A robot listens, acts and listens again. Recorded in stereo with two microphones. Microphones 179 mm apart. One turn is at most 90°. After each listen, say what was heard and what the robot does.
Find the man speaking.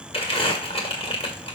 Keep listening.
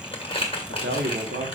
The man speaking: about 70° right or 110° right. Turn 70° right.
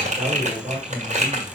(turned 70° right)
So it is at 35° right. Turn 35° right.
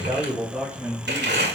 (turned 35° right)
The man speaking is now 10° right. Turn 10° right.
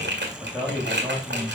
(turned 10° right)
Facing the man speaking.